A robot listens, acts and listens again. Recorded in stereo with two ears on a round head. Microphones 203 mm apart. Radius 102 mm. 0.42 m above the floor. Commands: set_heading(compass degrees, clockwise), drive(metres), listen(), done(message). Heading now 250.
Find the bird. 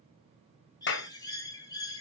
set_heading(230)
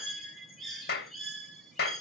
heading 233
done("Facing the bird, 2 to 4 m away.")